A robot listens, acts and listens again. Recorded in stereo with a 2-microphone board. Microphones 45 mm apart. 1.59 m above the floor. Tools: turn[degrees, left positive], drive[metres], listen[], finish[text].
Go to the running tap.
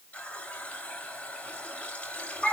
Thought: The running tap: about 30° left or 150° left.
Action: turn[30]
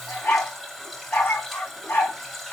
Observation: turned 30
Action: drive[1.0]
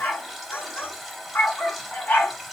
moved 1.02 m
Action: drive[1.0]
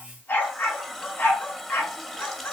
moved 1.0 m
Action: drive[1.0]
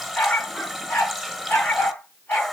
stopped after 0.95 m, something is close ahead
Action: finish[I am next to the running tap.]